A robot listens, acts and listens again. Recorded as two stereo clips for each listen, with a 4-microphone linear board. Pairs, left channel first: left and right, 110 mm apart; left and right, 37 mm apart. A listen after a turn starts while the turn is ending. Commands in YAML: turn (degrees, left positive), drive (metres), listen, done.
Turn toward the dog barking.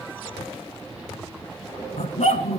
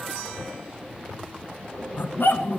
turn: 90
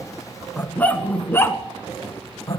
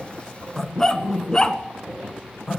turn: 30
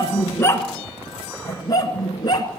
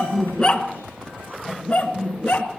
turn: 35
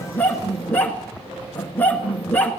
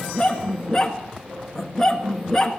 turn: 15
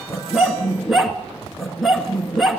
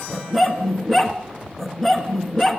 done: "Facing the dog barking, 1 to 2 m away."